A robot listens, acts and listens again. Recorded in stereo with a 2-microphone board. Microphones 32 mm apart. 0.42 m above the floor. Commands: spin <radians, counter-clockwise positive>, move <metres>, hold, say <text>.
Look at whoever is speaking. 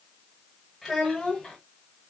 spin 0.52
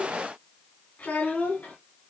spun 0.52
spin 2.01
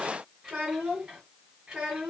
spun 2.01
spin -0.35
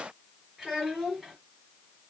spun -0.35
say Facing the child speaking, over 4 m away.